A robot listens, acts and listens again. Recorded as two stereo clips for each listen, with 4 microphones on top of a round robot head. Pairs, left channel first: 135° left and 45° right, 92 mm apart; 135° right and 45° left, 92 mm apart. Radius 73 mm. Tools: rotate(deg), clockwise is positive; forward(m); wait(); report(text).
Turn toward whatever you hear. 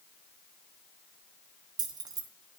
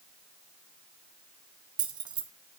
report("Found it: keys jangling, straight ahead.")